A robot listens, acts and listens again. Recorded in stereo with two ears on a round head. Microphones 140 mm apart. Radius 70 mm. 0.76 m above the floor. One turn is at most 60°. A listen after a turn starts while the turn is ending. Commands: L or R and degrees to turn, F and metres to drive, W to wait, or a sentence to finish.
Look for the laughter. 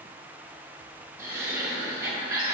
R20
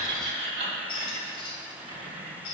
R60
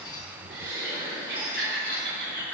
R60
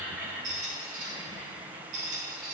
R20
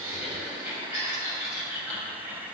R15
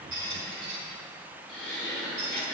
Found it: laughter, straight ahead, over 4 m away.